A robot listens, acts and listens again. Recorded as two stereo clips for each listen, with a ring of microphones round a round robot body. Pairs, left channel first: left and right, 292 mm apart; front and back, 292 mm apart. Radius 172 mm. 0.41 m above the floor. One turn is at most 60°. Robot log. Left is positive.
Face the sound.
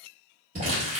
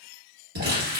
note: The crumpling: 160° right.
cmd yaw -60
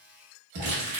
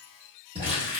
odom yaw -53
note: The crumpling is now 105° right.
cmd yaw -60
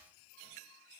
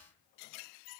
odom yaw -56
note: Nothing new. It was at 50° right.
cmd yaw -50
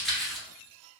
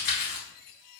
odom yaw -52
end: Facing the crumpling, 1 to 2 m away.